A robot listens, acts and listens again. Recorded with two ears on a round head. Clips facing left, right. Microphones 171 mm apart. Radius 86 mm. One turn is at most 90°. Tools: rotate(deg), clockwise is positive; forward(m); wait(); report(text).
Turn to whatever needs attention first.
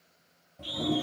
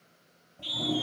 rotate(40)
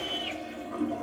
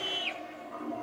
rotate(90)
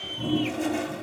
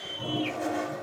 report("Facing the scream.")